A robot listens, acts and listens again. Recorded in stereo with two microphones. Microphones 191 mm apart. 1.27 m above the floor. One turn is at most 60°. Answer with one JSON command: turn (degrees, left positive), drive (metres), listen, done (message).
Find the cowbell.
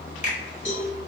{"turn": 60}
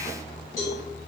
{"turn": 15}
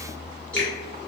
{"listen": true}
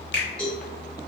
{"done": "Found it: a cowbell, straight ahead, 1 to 2 m away."}